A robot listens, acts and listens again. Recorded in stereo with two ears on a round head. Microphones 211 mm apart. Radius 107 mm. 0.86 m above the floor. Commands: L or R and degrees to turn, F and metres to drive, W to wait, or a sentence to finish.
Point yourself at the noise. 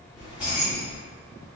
R30
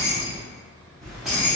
R30
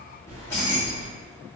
L30
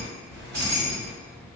R45
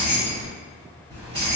R20
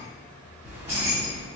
R10
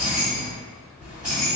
Found it: keys jangling, straight ahead.